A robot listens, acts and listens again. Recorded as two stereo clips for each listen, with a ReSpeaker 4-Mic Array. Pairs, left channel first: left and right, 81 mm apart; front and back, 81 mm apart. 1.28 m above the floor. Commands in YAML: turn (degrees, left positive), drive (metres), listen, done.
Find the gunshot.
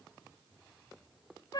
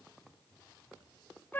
listen: true
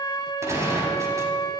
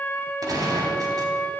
turn: -140
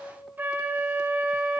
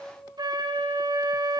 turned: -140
done: "Facing where the gunshot came from. I can't hear it now."